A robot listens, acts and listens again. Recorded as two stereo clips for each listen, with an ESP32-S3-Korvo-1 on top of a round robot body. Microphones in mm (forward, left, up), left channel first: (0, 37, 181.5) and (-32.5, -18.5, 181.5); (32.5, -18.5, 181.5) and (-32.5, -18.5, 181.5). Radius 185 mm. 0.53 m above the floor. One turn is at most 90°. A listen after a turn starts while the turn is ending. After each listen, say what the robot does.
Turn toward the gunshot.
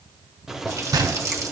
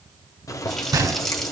Turn 90° right.
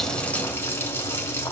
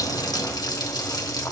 Turn 55° right.
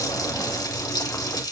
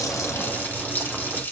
Facing where the gunshot came from. I can't hear it now.